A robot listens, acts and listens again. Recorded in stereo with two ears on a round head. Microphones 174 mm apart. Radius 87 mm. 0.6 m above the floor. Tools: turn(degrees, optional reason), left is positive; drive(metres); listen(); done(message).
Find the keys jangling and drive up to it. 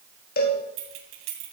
turn(degrees=-70, reason="The keys jangling: about 70° right or 110° right.")
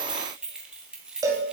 drive(metres=1.0)
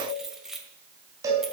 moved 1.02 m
drive(metres=1.0)
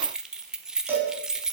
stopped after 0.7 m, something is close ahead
done("I am next to the keys jangling.")